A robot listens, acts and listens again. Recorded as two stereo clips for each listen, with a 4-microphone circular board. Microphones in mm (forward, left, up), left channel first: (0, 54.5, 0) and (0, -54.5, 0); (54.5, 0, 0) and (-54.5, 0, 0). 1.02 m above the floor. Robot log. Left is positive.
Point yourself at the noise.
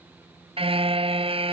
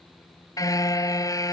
note: The car horn: 60° right.
cmd yaw -60
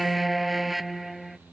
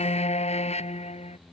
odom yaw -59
end: Facing the car horn.